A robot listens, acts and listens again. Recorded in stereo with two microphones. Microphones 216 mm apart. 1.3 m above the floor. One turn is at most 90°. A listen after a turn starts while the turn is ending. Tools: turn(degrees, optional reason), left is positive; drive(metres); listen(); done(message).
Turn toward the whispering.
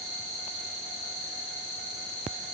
listen()
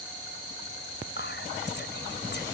turn(degrees=55, reason="The whispering: about 55° left or 125° left.")
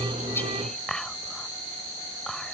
done("Facing the whispering.")